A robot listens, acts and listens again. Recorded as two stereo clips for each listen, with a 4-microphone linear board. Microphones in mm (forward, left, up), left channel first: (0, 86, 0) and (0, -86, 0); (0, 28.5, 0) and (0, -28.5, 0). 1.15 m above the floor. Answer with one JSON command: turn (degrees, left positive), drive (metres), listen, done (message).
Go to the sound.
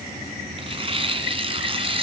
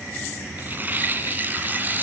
{"turn": -35}
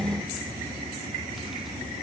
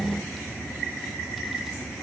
{"listen": true}
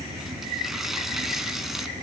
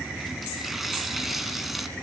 {"listen": true}
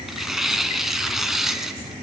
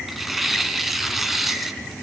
{"drive": 1.0}
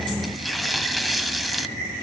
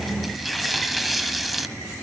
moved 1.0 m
{"drive": 1.0}
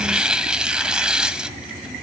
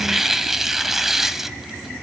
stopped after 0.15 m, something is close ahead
{"done": "Arrived at the tearing paper, straight ahead."}